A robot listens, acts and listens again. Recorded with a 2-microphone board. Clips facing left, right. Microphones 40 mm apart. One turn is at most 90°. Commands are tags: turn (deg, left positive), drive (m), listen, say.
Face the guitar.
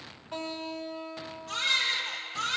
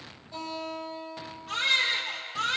<turn deg="70"/>
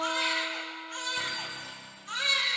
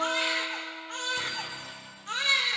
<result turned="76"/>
<listen/>
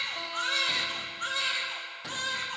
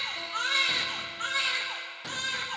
<listen/>
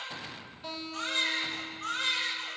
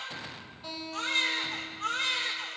<say>Found it: a guitar, straight ahead, over 4 m away.</say>